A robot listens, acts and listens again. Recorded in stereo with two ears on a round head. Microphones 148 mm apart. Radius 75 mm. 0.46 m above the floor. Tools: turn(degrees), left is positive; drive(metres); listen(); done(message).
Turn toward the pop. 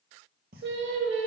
turn(degrees=-65)
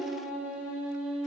listen()
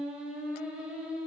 done("I heard a pop, but can't make it out now. It was about straight ahead or 50° right.")